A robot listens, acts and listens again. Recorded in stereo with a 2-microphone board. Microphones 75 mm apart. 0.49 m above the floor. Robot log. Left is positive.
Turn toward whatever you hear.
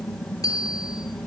note: The bicycle bell: about 55° left or 125° left.
cmd yaw +55
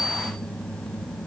note: So it is at 70° left.
cmd yaw +70
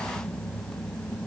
cmd idle
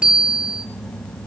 note: The bicycle bell is now 10° right.
cmd yaw -10
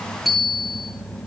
end: Found it: a bicycle bell, straight ahead, over 4 m away.